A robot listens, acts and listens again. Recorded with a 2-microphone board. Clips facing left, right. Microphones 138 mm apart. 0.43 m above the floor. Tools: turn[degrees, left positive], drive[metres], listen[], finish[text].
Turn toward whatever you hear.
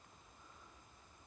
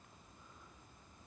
Action: listen[]
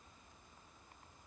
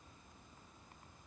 Action: listen[]
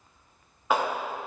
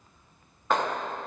Action: turn[30]
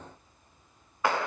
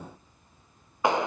Thought: So it is at 25° right.
Action: turn[-25]
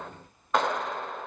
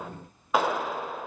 Action: finish[Found it: a clap, straight ahead, under 1 m away.]